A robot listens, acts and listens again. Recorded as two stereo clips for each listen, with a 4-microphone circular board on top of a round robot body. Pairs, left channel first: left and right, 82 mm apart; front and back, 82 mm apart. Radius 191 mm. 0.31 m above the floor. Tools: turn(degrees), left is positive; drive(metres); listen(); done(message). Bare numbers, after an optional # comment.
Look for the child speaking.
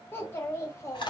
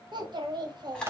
# The child speaking: 145° left.
turn(145)
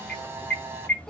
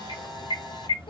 listen()
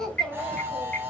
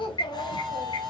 done("Found it: a child speaking, straight ahead.")